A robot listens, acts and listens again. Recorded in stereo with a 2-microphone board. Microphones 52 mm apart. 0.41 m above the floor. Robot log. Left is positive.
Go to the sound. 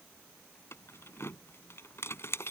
note: The keys jangling: about 60° left or 120° left.
cmd yaw +60
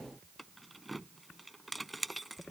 cmd fwd 1.0
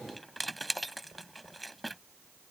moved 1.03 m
cmd fwd 1.0
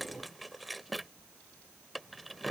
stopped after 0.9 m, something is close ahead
end: Arrived at the keys jangling, straight ahead.